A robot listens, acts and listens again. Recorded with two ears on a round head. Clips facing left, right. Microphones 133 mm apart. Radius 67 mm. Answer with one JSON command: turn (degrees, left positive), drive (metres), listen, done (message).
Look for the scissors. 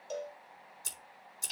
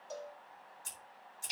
{"turn": 50}
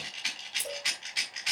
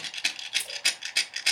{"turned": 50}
{"done": "Facing the scissors."}